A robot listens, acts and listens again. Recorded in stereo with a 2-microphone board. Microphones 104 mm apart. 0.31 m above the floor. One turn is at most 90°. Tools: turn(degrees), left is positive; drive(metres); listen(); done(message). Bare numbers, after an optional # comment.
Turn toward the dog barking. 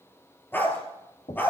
# The dog barking: about 20° left or 160° left.
turn(20)
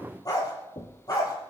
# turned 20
# The dog barking: about 35° left or 145° left.
turn(35)
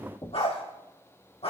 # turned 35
# So it is at 110° left.
turn(90)
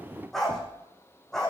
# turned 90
done("Found it: a dog barking, straight ahead, over 4 m away.")